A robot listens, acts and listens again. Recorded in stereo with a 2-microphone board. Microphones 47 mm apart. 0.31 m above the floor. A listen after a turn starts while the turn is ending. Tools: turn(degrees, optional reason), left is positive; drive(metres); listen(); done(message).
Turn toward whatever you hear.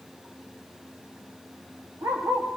turn(degrees=-90)
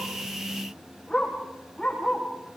turn(degrees=15, reason="So it is at 15° left.")
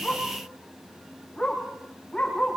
turn(degrees=10, reason="The dog barking is now 10° left.")
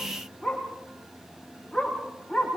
done("Facing the dog barking.")